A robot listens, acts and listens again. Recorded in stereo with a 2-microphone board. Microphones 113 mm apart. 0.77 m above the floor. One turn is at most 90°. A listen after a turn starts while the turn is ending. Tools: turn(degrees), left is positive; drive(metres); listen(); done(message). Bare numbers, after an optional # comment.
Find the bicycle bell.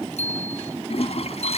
turn(90)
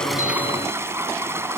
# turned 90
listen()
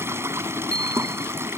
# The bicycle bell is now 10° left.
turn(10)
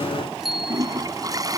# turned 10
done("Found it: a bicycle bell, straight ahead.")